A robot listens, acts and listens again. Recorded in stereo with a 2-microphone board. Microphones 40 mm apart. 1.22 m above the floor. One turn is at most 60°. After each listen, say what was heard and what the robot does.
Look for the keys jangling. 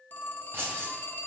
The keys jangling: about 70° right or 110° right. Turn 60° right.
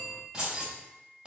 So it is at 20° right. Turn 20° right.
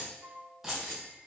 The keys jangling is now 10° right. Turn 10° right.
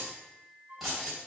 Facing the keys jangling.